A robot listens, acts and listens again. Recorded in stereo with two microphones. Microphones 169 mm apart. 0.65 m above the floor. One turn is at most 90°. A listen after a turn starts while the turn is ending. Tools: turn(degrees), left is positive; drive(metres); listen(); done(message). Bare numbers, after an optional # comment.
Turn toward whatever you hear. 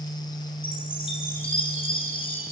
# The chime: about 30° left or 150° left.
turn(30)
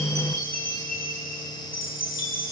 # So it is at 120° left.
turn(90)
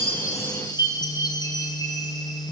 # The chime is now 25° left.
turn(25)
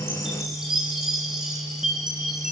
done("Facing the chime.")